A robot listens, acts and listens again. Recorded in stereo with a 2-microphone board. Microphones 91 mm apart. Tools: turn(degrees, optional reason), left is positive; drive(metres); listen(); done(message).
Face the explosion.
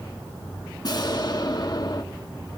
turn(degrees=50, reason="The explosion: about 50° left or 130° left.")
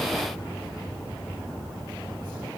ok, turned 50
listen()
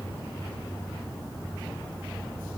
done("I heard an explosion, but can't make it out now. It was about straight ahead or 80° left.")